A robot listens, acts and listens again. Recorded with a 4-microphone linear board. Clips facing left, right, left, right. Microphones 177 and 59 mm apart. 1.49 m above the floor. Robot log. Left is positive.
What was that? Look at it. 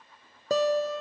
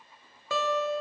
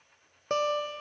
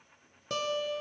note: The guitar: about 40° left or 140° left.
cmd yaw +40
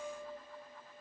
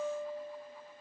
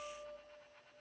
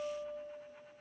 note: So it is at 100° left.
cmd yaw +100
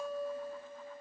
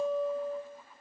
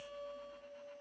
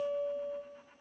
note: The guitar is now 25° right.
cmd yaw -25
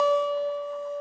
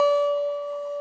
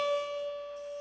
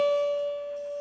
end: Facing the guitar.